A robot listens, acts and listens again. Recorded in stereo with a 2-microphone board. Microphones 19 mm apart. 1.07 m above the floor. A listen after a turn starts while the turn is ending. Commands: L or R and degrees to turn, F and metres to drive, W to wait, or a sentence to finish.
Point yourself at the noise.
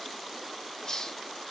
L35
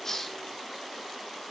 W
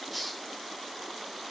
Found it: a hiss, straight ahead, 2 to 4 m away.